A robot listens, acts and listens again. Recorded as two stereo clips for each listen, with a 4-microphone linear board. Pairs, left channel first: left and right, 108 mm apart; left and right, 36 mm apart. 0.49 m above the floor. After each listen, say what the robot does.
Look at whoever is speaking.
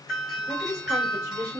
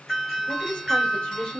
Turn 25° left.
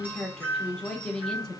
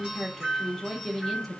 Facing the woman speaking.